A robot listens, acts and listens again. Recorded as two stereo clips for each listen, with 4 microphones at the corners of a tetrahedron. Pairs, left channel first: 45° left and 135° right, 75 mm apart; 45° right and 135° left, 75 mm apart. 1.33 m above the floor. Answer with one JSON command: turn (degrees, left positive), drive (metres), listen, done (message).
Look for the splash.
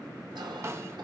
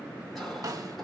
{"listen": true}
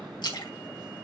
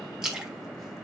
{"turn": 55}
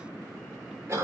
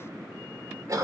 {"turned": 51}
{"done": "I heard a splash from this way, but can't make it out now."}